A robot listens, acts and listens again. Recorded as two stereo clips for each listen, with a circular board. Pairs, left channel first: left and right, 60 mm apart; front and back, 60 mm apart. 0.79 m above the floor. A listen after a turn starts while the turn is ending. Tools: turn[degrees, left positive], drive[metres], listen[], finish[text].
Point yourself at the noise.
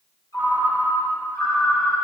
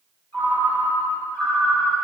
Thought: The ringtone: 65° left.
Action: turn[65]
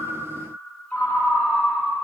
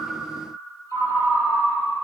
Thought: The ringtone is now 20° left.
Action: turn[20]
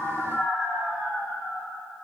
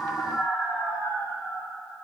Action: finish[Facing the ringtone.]